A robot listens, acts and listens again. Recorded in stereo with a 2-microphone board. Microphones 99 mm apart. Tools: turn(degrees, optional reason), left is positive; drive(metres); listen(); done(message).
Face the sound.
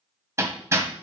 turn(degrees=-25, reason="The hammering: about 25° right or 155° right.")
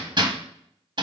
turn(degrees=-130, reason="So it is at 130° right.")
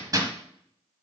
turn(degrees=-40, reason="The hammering is now 40° right.")
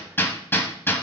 turn(degrees=20, reason="The hammering is now 20° left.")
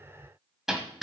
done("Facing the hammering, 1 to 2 m away.")